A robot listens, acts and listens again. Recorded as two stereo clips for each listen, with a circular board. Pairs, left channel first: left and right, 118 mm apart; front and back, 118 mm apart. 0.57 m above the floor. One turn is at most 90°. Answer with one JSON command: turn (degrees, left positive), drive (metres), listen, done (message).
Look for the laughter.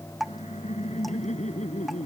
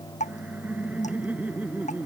{"turn": 90}
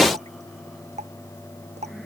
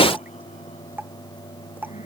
{"turn": 15}
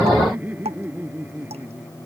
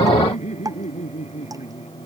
{"turn": -15}
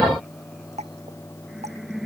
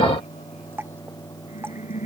{"done": "Facing the laughter."}